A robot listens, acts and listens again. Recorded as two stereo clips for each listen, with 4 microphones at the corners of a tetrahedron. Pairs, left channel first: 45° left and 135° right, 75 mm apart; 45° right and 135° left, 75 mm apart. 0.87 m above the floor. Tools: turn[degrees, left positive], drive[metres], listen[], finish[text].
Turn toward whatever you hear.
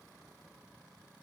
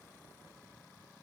Action: listen[]
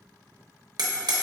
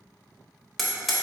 Thought: The hammering: 130° right.
Action: turn[-130]
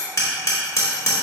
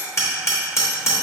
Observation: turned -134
Action: finish[Facing the hammering, under 1 m away.]